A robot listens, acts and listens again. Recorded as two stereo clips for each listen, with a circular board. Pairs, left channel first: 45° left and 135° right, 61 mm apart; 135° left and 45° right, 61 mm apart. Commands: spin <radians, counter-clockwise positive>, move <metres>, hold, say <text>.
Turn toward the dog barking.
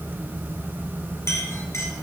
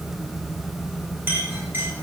hold
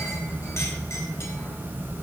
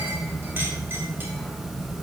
hold
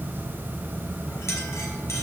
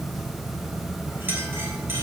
say I can't make out a dog barking to turn to.